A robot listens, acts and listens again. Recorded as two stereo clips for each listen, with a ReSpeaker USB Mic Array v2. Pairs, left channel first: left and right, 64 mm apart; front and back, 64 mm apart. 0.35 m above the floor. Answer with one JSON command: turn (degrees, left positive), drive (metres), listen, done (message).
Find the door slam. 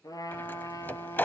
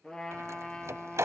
{"turn": 145}
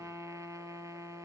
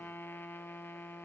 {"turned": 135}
{"turn": 10}
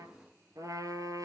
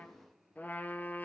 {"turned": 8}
{"done": "Facing where the door slam came from. I can't hear it now."}